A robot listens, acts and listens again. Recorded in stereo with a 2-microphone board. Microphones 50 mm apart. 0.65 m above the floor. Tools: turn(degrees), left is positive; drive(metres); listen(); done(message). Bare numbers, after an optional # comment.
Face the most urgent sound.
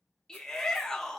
turn(30)
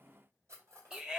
# So it is at 20° right.
turn(-20)
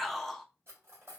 done("Facing the shout.")